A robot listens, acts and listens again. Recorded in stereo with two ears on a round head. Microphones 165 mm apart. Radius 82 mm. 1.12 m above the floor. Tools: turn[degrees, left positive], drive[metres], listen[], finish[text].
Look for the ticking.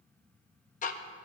Thought: The ticking: about 45° left or 135° left.
Action: turn[45]
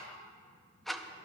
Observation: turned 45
Action: finish[Facing the ticking, under 1 m away.]